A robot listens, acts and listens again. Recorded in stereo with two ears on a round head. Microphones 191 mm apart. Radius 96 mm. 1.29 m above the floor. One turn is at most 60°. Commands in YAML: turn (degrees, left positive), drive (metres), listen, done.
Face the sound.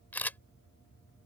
turn: 30
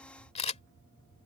turn: 60
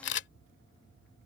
turn: 60
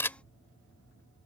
turn: 15
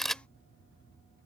done: "Facing the camera shutter."